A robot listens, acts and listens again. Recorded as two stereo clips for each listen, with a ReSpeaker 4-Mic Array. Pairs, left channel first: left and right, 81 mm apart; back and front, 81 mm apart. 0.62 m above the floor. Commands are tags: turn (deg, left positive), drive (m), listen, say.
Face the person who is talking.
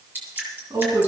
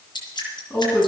<turn deg="-105"/>
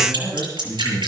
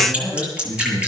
<turn deg="-30"/>
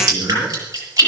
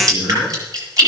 <listen/>
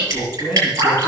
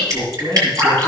<say>Found it: a man speaking, straight ahead, over 4 m away.</say>